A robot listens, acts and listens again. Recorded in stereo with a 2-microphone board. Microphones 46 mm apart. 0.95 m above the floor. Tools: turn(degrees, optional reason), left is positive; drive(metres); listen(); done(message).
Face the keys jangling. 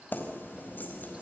turn(degrees=40, reason="The keys jangling: about 40° left or 140° left.")
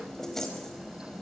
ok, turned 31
done("Facing the keys jangling, over 4 m away.")